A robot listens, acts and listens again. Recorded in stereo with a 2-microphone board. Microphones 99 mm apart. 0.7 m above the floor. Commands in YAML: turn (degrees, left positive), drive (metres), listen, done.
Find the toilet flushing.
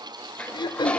turn: 30
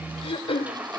turn: -15
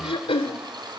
listen: true
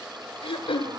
listen: true
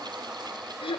done: "I heard a toilet flushing from this way, but can't make it out now."